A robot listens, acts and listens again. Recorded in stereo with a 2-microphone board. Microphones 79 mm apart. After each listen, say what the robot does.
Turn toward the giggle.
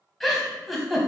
Turn 30° left.
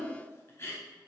Turn 145° left.
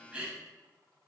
Turn 15° right.
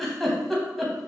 Facing the giggle.